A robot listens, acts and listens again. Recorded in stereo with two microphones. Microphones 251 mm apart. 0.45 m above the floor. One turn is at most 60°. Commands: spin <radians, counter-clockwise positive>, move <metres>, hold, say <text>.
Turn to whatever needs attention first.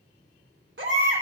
spin -0.87
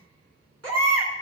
spin -1.05
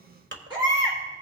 spin -0.35
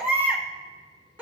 say Found it: a baby crying, straight ahead.